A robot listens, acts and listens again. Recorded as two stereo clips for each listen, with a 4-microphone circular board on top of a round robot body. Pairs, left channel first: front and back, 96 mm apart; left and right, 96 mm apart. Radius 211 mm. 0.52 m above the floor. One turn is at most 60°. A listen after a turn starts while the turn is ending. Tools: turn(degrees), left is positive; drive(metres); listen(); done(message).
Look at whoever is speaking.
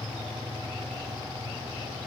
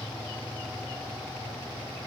listen()
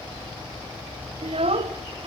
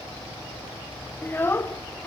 turn(degrees=60)
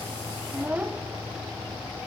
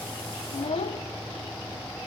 turn(degrees=60)
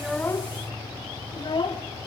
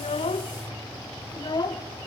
turn(degrees=45)
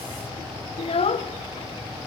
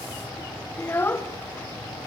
turn(degrees=20)
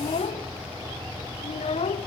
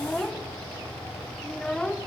done("Facing the child speaking.")